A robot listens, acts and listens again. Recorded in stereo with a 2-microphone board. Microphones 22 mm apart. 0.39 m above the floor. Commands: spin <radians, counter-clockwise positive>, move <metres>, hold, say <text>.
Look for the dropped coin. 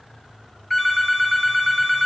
hold
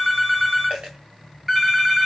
spin -1.57
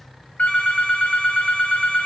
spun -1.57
say I heard a dropped coin from this way, but can't make it out now.